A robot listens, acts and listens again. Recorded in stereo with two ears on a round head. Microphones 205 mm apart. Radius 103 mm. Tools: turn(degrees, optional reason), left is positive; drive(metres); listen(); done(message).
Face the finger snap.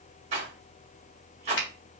turn(degrees=55, reason="The finger snap: about 55° left or 125° left.")
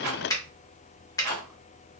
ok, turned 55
turn(degrees=20, reason="So it is at 20° left.")
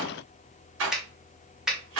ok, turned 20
done("Facing the finger snap.")